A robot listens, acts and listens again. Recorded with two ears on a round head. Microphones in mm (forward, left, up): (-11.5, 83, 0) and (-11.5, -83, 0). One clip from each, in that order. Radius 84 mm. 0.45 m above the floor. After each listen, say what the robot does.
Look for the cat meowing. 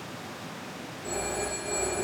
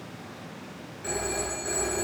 Keep listening.
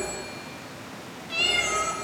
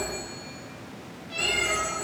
Turn 35° left.
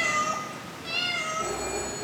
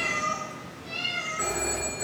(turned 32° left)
Turn 130° left.
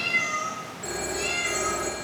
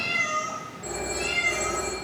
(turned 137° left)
Found it: a cat meowing, straight ahead.